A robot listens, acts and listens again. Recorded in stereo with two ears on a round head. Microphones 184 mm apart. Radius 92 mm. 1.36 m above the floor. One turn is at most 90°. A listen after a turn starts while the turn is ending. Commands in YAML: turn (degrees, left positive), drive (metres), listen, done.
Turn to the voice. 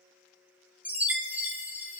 listen: true
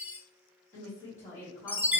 turn: 30
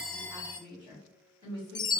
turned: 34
turn: -20
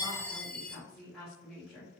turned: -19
done: "Facing the woman speaking, 1 to 2 m away."